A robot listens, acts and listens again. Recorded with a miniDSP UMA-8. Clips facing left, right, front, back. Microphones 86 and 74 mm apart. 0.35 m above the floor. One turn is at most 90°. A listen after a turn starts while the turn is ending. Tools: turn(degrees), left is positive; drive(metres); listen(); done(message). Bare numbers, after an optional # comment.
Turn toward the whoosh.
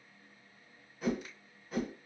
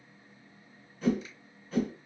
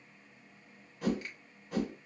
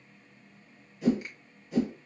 # The whoosh: 10° left.
turn(10)
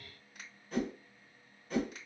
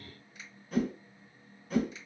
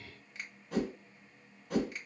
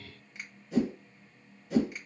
done("Found it: a whoosh, straight ahead, 1 to 2 m away.")